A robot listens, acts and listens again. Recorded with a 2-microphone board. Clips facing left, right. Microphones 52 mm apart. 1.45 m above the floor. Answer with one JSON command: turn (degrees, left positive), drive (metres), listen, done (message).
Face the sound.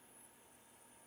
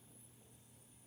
{"listen": true}
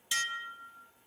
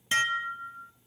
{"turn": -40}
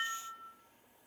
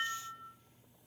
{"done": "Facing the dishes clattering, 1 to 2 m away."}